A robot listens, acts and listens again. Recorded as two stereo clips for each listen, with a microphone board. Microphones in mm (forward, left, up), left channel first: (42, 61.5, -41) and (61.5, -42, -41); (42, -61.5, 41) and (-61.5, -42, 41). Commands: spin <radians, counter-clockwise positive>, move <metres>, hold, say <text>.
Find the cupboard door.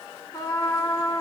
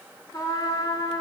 hold
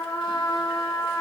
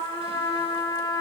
hold
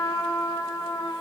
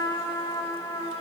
say I can't make out a cupboard door to turn to.